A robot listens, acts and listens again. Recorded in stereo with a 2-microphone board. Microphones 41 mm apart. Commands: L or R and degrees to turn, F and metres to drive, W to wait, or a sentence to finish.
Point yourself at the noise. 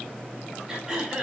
R30
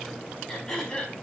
L20
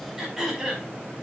Facing the throat clearing, over 4 m away.